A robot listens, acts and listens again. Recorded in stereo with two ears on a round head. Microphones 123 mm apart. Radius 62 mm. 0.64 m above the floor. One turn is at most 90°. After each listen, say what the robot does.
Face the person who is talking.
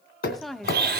Turn 30° left.
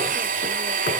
Keep listening.
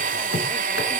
Keep listening.
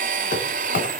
I heard a woman speaking, but can't make it out now. It was about 30° right or 150° left.